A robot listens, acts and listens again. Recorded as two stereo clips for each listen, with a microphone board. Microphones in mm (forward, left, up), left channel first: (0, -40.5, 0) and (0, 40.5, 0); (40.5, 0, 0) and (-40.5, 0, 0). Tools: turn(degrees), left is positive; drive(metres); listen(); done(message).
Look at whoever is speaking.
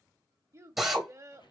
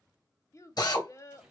turn(degrees=45)
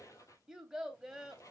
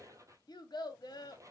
done("Facing the child speaking.")